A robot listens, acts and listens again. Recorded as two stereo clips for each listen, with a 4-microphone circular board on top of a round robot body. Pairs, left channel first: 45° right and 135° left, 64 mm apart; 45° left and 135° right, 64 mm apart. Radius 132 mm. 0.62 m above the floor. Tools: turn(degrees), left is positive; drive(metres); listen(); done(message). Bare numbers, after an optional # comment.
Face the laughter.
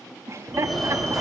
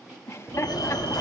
# The laughter: 95° left.
turn(95)
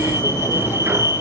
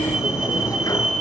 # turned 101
# Nothing new. It was at 10° right.
turn(-10)
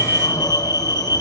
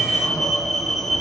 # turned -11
listen()
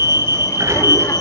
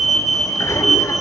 done("Facing where the laughter came from. I can't hear it now.")